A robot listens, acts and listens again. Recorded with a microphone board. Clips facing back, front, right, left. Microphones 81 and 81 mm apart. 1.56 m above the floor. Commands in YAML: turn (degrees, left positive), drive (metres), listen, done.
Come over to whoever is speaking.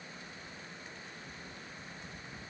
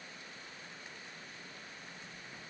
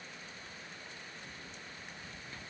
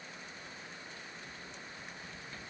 listen: true
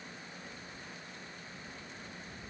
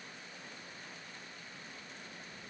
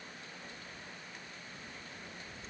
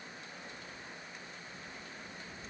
listen: true
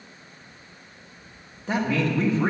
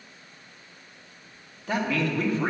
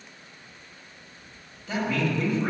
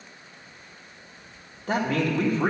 turn: 120
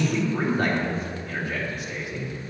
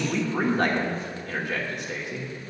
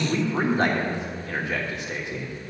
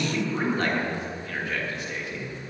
turn: -20
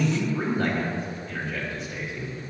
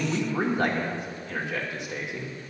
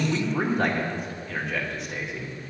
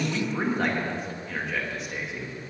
drive: 1.0
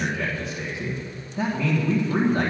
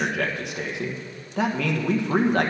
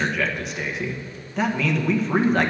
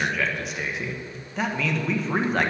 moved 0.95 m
drive: 1.0
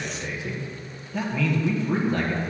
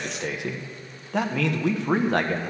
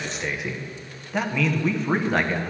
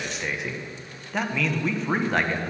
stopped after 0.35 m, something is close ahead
done: "Arrived at the man speaking, straight ahead."